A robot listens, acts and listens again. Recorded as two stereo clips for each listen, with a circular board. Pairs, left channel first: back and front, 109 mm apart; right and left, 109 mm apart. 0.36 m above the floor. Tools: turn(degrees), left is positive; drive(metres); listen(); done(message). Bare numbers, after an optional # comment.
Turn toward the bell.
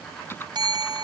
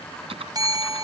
# The bell: 40° left.
turn(40)
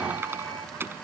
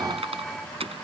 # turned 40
listen()
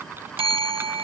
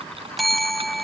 done("Facing the bell.")